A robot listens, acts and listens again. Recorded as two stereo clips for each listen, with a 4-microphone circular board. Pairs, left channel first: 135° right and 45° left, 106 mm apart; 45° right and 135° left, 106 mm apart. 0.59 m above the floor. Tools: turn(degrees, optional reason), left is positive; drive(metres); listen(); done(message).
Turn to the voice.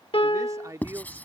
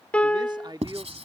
turn(degrees=100, reason="The man speaking: 100° left.")
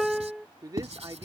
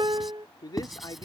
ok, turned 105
done("Found it: a man speaking, straight ahead.")